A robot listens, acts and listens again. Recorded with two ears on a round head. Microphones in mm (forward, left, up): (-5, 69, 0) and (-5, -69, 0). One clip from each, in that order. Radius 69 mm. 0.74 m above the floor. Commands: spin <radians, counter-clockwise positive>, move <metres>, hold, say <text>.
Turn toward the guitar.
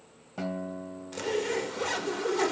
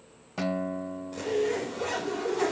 spin -0.79
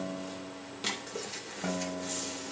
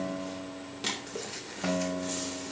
spin -1.57
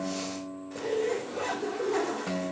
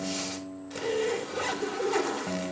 spin 0.35
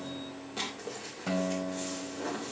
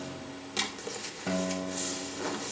say Found it: a guitar, straight ahead, 1 to 2 m away.